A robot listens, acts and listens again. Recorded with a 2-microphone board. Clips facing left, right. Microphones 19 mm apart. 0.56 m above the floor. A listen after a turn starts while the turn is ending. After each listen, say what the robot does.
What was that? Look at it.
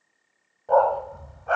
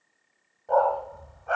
Turn 30° left.
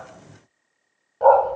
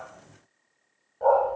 Turn 145° left.
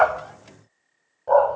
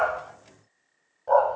Turn 10° left.
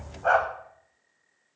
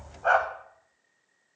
Found it: a dog barking, straight ahead.